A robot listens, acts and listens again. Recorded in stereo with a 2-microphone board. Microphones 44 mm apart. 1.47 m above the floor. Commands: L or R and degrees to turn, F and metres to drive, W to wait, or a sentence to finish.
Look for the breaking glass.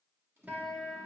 W
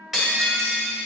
R30
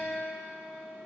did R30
W
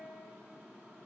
I heard breaking glass, but can't make it out now. It was about 20° left or 140° right.